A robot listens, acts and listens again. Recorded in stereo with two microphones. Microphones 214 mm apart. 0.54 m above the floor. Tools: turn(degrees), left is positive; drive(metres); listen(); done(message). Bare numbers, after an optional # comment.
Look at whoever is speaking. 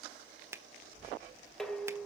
turn(90)
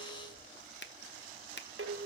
done("Facing the child speaking, over 4 m away.")